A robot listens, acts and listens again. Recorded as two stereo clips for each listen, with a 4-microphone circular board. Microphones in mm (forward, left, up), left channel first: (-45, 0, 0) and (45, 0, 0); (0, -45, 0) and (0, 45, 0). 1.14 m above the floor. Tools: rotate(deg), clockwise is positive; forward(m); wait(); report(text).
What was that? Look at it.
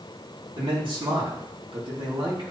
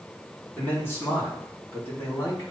rotate(30)
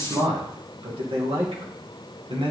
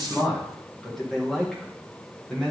report("Facing the man speaking.")